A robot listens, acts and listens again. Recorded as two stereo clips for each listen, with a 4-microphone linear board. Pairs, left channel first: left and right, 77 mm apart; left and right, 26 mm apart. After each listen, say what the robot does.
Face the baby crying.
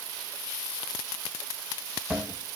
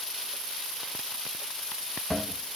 Keep listening.
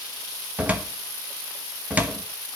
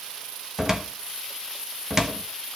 Keep listening.
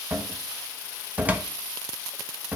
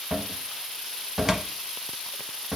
I can't make out a baby crying, only a cupboard door.